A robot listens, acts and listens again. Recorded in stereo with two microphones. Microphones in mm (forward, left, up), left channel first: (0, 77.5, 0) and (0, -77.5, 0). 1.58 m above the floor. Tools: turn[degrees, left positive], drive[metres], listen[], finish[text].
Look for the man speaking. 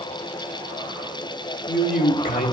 Thought: The man speaking: about 65° left or 115° left.
Action: turn[65]
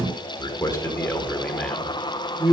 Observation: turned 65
Thought: So it is at 10° right.
Action: turn[-10]
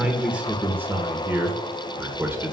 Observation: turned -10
Thought: The man speaking is now 15° right.
Action: turn[-15]
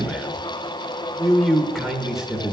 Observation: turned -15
Action: finish[Found it: a man speaking, straight ahead.]